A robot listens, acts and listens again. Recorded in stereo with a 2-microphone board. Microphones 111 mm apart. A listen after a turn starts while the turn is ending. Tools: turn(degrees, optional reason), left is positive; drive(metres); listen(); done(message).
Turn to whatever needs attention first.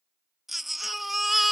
turn(degrees=30)
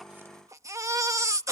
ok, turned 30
turn(degrees=-30, reason="So it is at 30° right.")
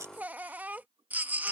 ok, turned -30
turn(degrees=-15, reason="The baby crying is now 15° right.")
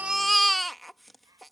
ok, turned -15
done("Facing the baby crying.")